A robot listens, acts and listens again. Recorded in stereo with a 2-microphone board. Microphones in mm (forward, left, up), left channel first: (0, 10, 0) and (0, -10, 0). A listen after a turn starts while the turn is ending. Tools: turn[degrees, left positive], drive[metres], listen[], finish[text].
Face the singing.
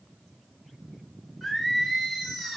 Action: turn[-30]
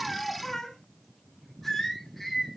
Thought: So it is at 10° left.
Action: turn[10]
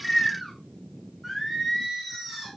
Thought: The singing is now 15° right.
Action: turn[-15]
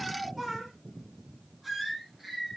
Action: finish[Facing the singing.]